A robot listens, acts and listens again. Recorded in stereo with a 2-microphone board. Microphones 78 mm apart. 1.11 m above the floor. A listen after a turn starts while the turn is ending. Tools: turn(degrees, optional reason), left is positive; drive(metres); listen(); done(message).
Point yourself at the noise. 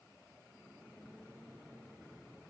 listen()
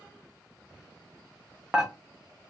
turn(degrees=-30)
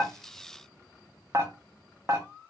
turn(degrees=-140, reason="So it is at 140° right.")
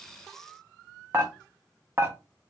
turn(degrees=-35, reason="The dishes clattering is now 35° right.")
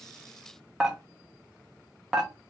turn(degrees=-10, reason="The dishes clattering is now 10° right.")
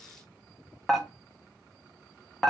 done("Facing the dishes clattering.")